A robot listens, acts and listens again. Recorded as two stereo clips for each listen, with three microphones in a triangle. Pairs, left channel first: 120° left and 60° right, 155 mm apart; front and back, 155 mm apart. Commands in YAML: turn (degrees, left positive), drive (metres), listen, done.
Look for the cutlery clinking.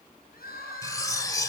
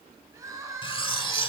turn: 55
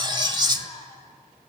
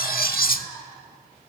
done: "Found it: cutlery clinking, straight ahead, 1 to 2 m away."